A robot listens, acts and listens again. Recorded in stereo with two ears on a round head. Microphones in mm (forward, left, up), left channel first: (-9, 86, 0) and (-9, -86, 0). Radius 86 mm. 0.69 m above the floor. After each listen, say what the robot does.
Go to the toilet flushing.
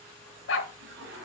Turn 55° right.
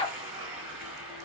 Drive 1.0 m forward.
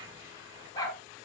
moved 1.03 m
Keep listening.
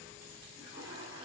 Turn 25° right.
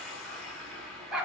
Drive 1.0 m forward.
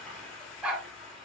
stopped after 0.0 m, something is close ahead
I am next to the toilet flushing.